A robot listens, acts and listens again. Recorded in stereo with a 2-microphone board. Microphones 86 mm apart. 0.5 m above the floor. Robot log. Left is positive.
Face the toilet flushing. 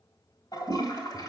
note: The toilet flushing: about 55° left or 125° left.
cmd yaw +55
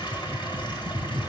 cmd idle
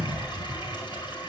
note: So it is at 70° left.
cmd yaw +70
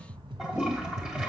note: The toilet flushing is now 15° right.
cmd yaw -15
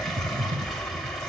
cmd idle
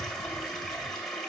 end: Found it: a toilet flushing, straight ahead, 2 to 4 m away.